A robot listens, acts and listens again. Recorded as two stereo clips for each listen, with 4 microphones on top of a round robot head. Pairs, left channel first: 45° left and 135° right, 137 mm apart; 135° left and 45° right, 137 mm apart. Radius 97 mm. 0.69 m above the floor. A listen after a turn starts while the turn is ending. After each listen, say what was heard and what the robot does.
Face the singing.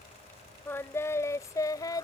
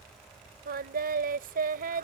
The singing: 20° right. Turn 20° right.
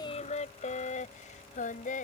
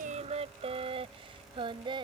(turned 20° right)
The singing is now 10° left. Turn 10° left.
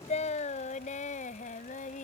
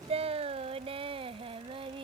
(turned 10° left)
The singing is now 10° left. Turn 10° left.
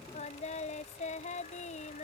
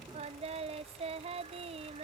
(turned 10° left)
Facing the singing.